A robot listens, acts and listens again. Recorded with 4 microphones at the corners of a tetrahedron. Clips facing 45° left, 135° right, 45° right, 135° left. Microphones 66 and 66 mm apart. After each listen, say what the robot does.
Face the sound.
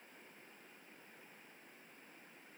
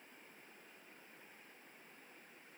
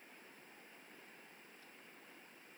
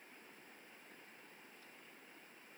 Keep listening.
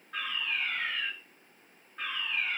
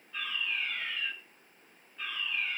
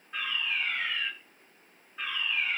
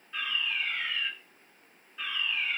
Turn 15° left.
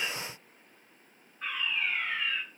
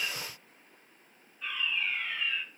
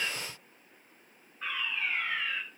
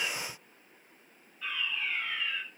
Found it: a fire alarm, straight ahead, over 4 m away.